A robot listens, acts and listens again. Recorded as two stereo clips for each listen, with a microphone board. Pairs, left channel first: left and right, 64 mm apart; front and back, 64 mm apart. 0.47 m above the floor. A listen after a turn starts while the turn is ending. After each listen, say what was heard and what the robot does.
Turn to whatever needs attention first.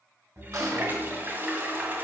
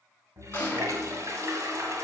Keep listening.
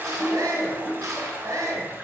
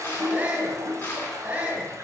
The shout: 115° right. Turn 115° right.
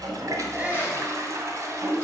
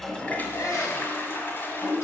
The shout is now 25° right. Turn 25° right.
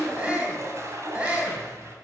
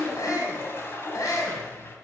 The shout is now 20° right. Turn 20° right.
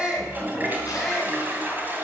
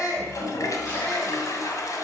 Keep listening.
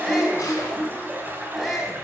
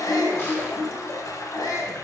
Found it: a shout, straight ahead, 2 to 4 m away.